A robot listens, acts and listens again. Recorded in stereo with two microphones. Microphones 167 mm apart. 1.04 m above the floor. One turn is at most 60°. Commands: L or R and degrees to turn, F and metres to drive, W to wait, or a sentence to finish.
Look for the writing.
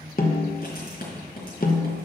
L60
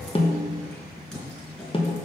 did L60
Facing the writing, 2 to 4 m away.